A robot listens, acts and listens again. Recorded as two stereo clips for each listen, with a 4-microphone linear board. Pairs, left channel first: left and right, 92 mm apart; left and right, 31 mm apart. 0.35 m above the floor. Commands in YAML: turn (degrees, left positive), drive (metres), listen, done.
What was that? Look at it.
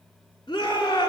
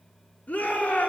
turn: 50
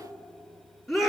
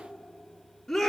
done: "Found it: a shout, straight ahead, over 4 m away."